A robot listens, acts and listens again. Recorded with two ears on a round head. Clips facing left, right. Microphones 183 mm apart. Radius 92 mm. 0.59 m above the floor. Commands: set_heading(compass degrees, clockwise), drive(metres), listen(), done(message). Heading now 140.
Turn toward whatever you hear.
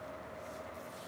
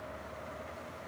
listen()
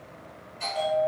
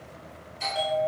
set_heading(170)
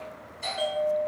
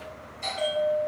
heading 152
done("Facing the bell.")